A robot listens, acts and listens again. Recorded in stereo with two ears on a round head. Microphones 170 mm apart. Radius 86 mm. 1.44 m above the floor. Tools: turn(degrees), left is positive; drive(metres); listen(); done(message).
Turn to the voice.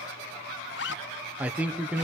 turn(degrees=-30)
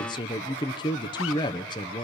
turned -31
turn(degrees=25)
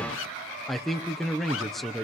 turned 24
done("Facing the man speaking, under 1 m away.")